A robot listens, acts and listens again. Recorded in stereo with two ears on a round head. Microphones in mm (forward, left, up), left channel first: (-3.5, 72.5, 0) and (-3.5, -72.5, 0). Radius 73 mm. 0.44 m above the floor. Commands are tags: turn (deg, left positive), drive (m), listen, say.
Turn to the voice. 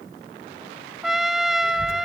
<turn deg="20"/>
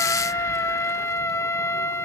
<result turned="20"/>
<listen/>
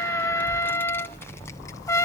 <turn deg="25"/>
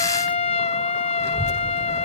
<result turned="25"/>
<turn deg="20"/>
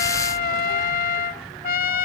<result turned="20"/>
<turn deg="30"/>
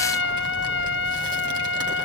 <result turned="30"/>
<turn deg="-30"/>
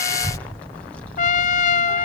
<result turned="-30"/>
<turn deg="10"/>
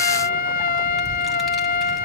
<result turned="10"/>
<say>Found it: a child speaking, straight ahead, 1 to 2 m away.</say>